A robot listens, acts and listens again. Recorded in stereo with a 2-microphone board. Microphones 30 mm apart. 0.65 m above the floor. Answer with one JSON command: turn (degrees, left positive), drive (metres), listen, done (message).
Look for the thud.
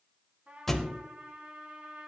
{"turn": 30}
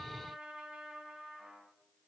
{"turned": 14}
{"listen": true}
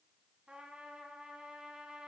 {"done": "I heard a thud, but can't make it out now. It was about straight ahead or 155° left."}